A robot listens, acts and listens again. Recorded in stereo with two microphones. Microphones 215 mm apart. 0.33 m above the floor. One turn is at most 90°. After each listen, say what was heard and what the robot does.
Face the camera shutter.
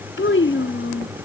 Keep listening.
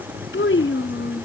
Keep listening.
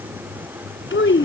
I can't make out a camera shutter, only a child speaking.